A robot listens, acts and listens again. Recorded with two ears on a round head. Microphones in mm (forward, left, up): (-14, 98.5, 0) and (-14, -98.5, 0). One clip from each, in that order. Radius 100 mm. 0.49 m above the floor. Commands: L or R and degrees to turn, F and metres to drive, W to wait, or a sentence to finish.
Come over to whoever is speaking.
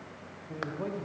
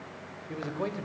R55
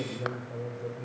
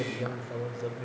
R55
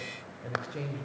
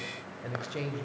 R30
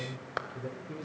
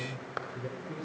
F1.0
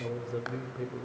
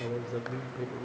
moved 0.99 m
F1.0
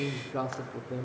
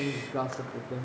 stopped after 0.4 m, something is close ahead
I am next to the man speaking.